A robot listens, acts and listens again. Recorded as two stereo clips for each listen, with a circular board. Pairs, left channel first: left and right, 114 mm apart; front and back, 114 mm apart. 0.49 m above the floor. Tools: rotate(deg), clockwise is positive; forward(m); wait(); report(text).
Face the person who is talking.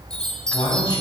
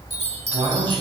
rotate(-135)
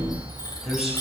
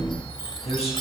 report("Found it: a man speaking, straight ahead, 2 to 4 m away.")